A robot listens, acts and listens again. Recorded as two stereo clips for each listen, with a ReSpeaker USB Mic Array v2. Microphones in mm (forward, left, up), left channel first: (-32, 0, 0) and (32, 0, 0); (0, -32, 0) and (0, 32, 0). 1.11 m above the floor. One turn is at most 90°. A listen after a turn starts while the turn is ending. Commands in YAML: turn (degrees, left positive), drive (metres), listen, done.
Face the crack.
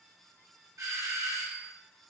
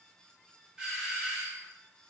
listen: true
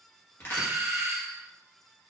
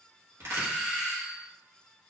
turn: 90
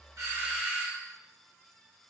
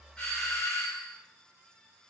turn: 40
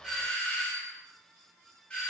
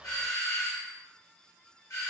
done: "Facing where the crack came from. I can't hear it now."